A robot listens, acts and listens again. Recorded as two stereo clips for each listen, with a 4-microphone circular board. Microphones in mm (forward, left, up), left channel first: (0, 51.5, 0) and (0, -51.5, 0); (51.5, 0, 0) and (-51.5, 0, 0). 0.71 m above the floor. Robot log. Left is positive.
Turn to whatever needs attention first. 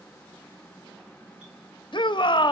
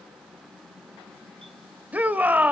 note: The shout: 110° left.
cmd yaw +110
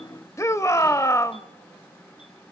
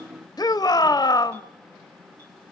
note: The shout is now 35° left.
cmd yaw +35
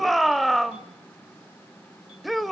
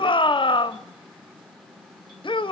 end: Facing the shout.